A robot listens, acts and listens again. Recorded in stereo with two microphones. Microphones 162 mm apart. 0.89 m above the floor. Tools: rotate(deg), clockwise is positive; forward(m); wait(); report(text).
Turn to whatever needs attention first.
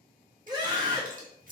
rotate(25)
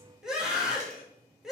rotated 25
report("Facing the scream, 1 to 2 m away.")